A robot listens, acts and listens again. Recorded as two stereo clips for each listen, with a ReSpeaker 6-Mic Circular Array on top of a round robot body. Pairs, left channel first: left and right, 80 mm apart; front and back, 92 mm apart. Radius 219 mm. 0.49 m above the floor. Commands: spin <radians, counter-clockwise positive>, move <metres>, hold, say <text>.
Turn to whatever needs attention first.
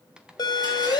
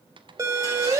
spin 2.18
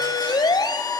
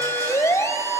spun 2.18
spin 1.05
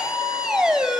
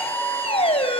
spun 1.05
spin -0.17
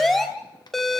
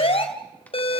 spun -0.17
say Found it: a siren, straight ahead, 2 to 4 m away.